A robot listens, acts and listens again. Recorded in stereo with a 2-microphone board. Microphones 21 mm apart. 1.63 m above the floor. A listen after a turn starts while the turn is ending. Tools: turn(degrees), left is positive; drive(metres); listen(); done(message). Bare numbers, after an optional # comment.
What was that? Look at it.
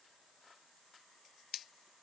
listen()
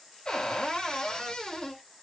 # The cupboard door: about 35° left or 145° left.
turn(35)
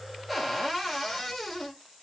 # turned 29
done("Facing the cupboard door.")